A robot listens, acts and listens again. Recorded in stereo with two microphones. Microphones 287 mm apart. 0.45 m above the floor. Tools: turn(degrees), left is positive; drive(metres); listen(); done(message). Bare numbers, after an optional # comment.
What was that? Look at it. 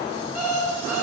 # The alarm clock: about 75° right or 105° right.
turn(-75)
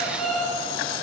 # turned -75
done("Found it: an alarm clock, straight ahead, 2 to 4 m away.")